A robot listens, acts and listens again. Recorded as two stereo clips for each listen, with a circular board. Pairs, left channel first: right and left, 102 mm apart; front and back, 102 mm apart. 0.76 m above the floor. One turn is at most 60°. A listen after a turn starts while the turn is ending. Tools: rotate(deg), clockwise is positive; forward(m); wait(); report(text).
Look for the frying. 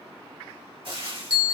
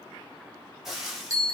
rotate(-60)
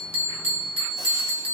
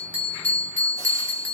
rotate(-35)
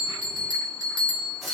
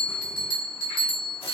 wait()
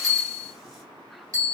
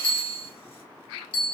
report("Facing where the frying came from. I can't hear it now.")